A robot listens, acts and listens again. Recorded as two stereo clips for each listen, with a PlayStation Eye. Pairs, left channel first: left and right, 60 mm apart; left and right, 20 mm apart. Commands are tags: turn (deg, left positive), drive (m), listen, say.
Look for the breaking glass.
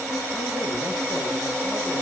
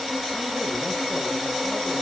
<listen/>
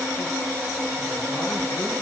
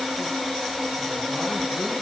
<listen/>
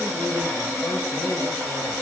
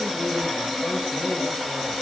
<say>I can't make out breaking glass.</say>